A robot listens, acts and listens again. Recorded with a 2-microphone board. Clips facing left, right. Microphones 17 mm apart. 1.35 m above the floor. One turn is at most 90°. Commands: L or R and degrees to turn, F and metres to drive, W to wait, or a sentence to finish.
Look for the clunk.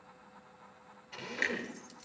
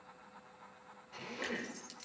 L60
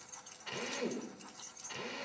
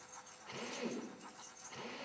W
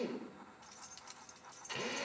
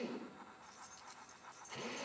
I heard a clunk, but can't make it out now. It was about straight ahead or 60° left.